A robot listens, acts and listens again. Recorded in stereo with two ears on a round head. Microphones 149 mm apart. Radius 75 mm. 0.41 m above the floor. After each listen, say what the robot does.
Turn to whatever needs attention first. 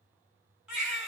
Turn 30° right.
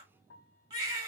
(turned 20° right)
Turn 155° right.
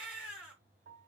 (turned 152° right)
Facing the baby crying.